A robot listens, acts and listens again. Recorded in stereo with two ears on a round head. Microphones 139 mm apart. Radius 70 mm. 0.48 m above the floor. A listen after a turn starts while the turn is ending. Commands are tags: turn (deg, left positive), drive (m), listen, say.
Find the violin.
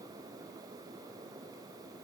<listen/>
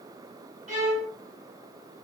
<turn deg="-45"/>
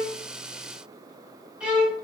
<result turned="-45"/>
<turn deg="-10"/>
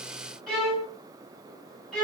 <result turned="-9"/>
<say>Facing the violin, 1 to 2 m away.</say>